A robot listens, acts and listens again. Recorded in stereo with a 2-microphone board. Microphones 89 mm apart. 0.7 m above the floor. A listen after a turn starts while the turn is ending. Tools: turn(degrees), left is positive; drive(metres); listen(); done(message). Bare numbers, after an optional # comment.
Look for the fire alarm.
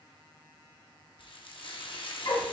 listen()
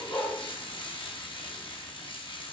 listen()
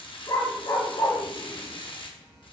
done("I can't make out a fire alarm to turn to.")